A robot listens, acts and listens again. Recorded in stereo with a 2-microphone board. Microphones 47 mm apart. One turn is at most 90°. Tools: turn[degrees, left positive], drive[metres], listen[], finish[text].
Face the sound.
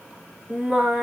Thought: The singing: about 20° right or 160° right.
Action: turn[-20]
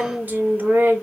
Thought: So it is at 140° right.
Action: turn[-90]
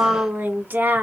Thought: The singing is now 50° right.
Action: turn[-50]
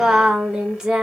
Thought: The singing is now 15° right.
Action: turn[-15]
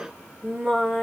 Action: finish[Facing the singing.]